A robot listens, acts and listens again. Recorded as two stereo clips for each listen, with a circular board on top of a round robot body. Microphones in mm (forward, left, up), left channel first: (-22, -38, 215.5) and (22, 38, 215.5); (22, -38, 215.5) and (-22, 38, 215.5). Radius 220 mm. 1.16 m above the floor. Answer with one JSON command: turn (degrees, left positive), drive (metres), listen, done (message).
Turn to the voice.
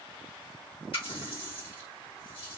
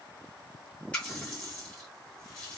{"listen": true}
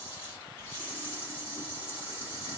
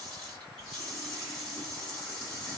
{"listen": true}
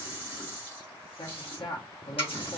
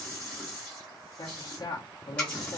{"turn": -95}
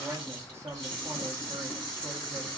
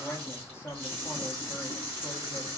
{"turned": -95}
{"done": "Found it: a man speaking, straight ahead."}